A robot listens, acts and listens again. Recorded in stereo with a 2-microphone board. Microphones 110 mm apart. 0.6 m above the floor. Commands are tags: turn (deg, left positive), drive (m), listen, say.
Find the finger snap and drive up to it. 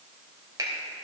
<turn deg="-40"/>
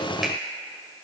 <listen/>
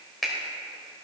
<drive m="1.0"/>
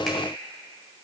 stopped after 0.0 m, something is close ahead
<listen/>
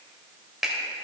<say>Something is in my way. I am facing the finger snap but have not reached it.</say>